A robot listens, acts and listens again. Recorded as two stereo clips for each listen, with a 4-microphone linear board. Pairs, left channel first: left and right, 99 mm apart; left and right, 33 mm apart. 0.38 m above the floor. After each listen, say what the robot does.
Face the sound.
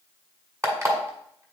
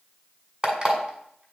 Turn 30° right.
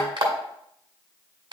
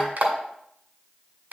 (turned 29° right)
Turn 120° right.
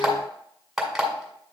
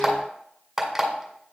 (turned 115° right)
Facing the alarm clock, 1 to 2 m away.